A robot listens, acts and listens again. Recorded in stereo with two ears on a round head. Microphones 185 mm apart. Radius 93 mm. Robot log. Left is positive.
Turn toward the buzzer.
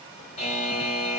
note: The buzzer: about 30° left or 150° left.
cmd yaw +30
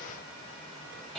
end: Facing the buzzer.